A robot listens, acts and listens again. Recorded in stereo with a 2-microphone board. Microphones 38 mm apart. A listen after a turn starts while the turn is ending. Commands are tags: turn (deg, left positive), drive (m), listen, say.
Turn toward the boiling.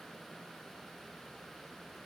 <listen/>
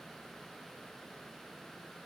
<listen/>
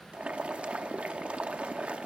<turn deg="-40"/>
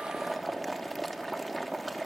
<say>Found it: boiling, straight ahead.</say>